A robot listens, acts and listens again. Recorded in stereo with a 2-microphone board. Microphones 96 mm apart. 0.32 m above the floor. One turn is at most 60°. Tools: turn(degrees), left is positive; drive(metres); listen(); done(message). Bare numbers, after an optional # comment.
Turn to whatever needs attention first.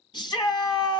# The shout: about 50° left or 130° left.
turn(50)
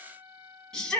# So it is at 10° left.
turn(10)
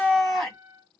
done("Facing the shout, 2 to 4 m away.")